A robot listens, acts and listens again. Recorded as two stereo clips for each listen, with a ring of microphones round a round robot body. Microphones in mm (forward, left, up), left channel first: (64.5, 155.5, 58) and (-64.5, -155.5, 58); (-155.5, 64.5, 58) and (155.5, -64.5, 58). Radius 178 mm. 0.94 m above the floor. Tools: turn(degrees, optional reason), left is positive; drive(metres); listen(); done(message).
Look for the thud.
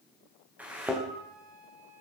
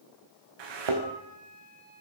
turn(degrees=-25, reason="The thud: 25° right.")
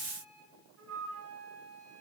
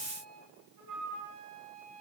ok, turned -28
done("I heard a thud from this way, but can't make it out now.")